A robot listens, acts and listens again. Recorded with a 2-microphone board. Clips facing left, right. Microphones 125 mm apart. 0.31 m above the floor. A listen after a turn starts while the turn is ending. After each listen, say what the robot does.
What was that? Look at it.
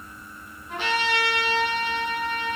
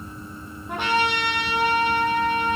Turn 55° right.
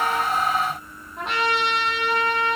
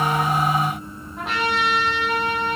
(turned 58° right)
Found it: a trumpet, straight ahead, 2 to 4 m away.